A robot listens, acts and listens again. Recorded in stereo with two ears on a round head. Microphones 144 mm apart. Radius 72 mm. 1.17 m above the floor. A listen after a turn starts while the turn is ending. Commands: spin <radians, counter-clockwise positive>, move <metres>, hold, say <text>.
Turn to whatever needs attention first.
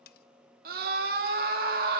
spin -1.05
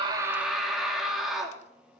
say Facing the scream, 2 to 4 m away.